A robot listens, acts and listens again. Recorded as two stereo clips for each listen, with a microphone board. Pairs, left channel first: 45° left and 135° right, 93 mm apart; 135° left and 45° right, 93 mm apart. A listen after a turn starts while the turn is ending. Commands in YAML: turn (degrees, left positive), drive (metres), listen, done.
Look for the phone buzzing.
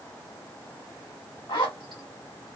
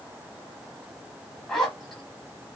listen: true
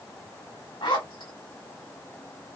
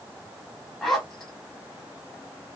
listen: true
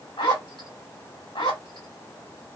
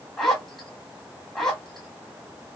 done: "I can't make out a phone buzzing to turn to."